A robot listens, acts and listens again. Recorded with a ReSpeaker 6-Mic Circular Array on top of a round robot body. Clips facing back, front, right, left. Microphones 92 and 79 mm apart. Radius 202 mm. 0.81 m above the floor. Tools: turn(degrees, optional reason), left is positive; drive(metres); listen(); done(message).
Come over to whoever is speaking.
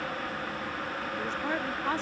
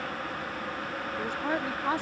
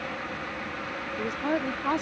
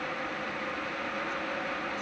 turn(degrees=-75, reason="The woman speaking: 75° right.")
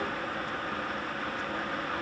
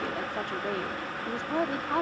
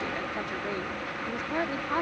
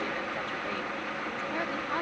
turn(degrees=-15, reason="The woman speaking is now 15° right.")
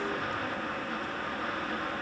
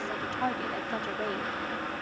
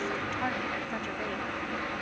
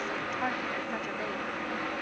drive(metres=1.0)
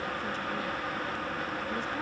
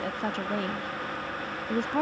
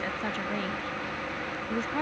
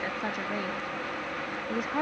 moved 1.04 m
turn(degrees=10, reason="The woman speaking is now 10° left.")
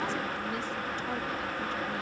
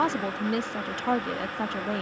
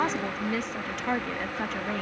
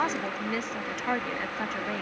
drive(metres=1.0)
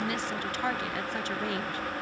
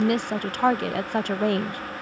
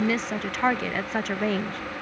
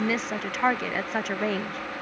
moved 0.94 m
drive(metres=1.0)
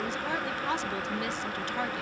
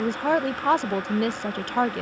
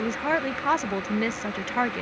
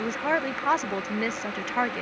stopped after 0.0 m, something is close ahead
done("I am next to the woman speaking.")